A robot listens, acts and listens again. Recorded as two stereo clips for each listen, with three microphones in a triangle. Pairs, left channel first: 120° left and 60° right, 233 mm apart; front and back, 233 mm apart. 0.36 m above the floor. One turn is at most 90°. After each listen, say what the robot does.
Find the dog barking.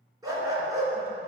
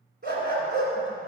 Turn 90° right.
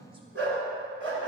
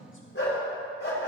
Turn 35° right.
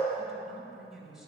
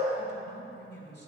Keep listening.
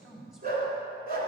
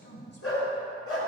Turn 10° right.
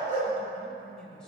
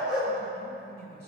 Found it: a dog barking, straight ahead, 2 to 4 m away.